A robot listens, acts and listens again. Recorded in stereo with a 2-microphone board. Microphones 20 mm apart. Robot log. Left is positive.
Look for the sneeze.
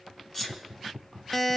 note: The sneeze: about 20° left or 160° left.
cmd yaw +20
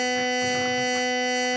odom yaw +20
cmd idle
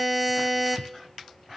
end: I heard a sneeze, but can't make it out now. It was about straight ahead or 140° left.